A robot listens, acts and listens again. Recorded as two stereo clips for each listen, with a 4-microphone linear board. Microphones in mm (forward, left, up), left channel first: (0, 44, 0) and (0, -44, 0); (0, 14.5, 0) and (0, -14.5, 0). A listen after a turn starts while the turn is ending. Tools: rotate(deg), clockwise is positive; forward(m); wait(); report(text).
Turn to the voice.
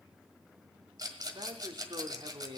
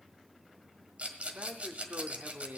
rotate(60)
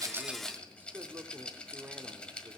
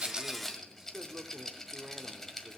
rotate(25)
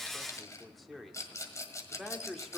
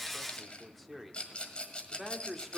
report("Found it: a man speaking, straight ahead, 1 to 2 m away.")